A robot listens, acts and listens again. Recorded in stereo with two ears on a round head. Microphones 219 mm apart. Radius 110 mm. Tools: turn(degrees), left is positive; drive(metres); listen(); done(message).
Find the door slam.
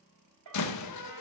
turn(degrees=90)
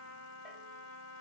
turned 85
done("I heard a door slam from this way, but can't make it out now.")